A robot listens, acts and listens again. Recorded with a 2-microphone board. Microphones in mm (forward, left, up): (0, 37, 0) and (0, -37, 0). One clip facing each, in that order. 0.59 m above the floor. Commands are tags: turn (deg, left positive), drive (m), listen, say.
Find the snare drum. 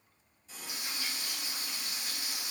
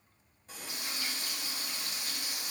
<listen/>
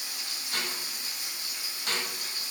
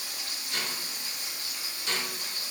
<turn deg="50"/>
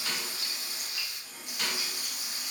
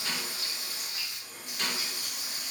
<say>Found it: a snare drum, straight ahead, 1 to 2 m away.</say>